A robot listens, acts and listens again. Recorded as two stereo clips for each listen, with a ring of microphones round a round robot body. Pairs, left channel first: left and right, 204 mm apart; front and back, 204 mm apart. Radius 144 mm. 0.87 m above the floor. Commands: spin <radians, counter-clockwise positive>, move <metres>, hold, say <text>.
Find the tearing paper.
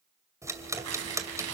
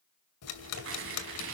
spin -2.27
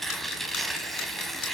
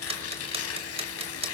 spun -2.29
say Found it: tearing paper, straight ahead, 2 to 4 m away.